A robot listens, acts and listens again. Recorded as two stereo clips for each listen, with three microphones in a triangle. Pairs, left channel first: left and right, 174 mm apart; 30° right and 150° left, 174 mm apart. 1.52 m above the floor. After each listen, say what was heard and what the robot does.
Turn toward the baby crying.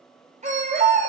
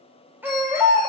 The baby crying: 135° right. Turn 135° right.
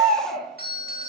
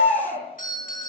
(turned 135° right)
Facing the baby crying, 2 to 4 m away.